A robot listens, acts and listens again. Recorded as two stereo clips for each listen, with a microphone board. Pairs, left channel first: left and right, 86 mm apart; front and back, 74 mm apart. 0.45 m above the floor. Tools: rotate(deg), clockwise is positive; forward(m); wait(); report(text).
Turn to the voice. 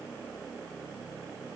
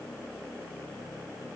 wait()
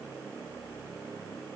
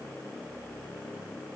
wait()
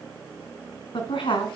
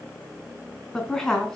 rotate(-85)
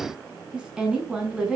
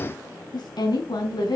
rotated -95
rotate(10)
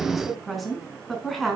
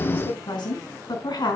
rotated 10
report("Found it: a woman speaking, straight ahead, over 4 m away.")